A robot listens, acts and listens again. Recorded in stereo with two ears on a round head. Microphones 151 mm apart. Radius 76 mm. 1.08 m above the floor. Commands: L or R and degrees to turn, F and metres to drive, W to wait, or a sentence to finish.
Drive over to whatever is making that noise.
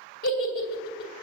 L65
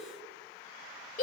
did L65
L50
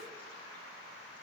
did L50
W
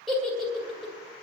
F1.0
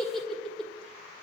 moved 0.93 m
F1.0
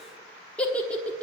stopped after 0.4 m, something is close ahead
L10
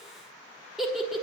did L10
Arrived at the giggle, straight ahead.